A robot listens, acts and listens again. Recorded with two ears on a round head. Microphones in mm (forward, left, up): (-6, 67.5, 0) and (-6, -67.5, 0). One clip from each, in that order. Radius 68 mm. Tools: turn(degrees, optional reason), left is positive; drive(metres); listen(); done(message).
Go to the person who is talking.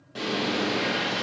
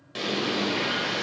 listen()
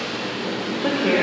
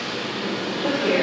turn(degrees=55, reason="The woman speaking: about 55° left or 125° left.")
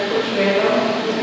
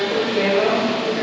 turn(degrees=15, reason="So it is at 15° left.")
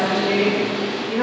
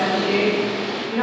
drive(metres=1.0)
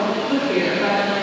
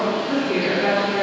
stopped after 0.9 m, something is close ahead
done("Arrived at the woman speaking, straight ahead.")